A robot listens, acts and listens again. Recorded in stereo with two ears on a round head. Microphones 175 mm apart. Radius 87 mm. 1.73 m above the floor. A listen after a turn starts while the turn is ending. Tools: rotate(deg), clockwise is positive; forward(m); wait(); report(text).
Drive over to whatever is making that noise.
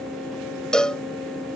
rotate(-30)
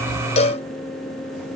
rotate(-145)
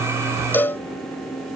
rotate(-10)
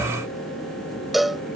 forward(1.0)
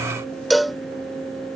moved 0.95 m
forward(1.0)
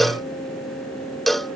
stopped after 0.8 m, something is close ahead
report("I am next to the cowbell.")